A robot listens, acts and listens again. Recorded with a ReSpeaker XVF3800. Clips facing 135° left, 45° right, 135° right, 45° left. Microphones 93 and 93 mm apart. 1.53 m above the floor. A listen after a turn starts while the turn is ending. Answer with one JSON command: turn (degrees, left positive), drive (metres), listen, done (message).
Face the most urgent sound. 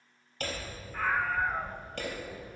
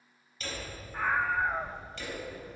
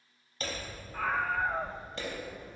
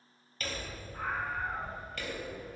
{"turn": -125}
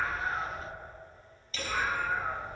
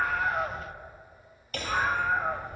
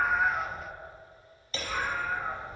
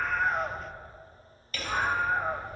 {"done": "Found it: a scream, straight ahead."}